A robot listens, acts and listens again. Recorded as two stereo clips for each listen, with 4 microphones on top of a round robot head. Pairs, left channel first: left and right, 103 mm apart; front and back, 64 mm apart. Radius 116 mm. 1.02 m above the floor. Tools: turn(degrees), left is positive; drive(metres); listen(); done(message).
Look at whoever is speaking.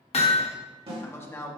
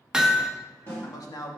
turn(degrees=25)
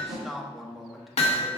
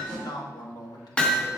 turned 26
done("Facing the man speaking.")